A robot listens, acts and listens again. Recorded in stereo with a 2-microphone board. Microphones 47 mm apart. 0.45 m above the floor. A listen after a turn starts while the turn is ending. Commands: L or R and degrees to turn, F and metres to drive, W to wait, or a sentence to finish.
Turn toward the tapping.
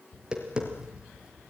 R20
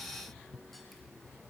Found it: tapping, straight ahead.